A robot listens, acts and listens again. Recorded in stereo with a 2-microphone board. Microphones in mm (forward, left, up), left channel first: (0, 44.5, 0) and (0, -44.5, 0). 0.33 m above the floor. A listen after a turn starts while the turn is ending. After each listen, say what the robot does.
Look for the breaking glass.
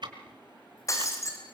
Turn 35° left.
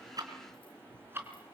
Keep listening.
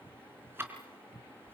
I heard breaking glass, but can't make it out now. It was about straight ahead or 110° left.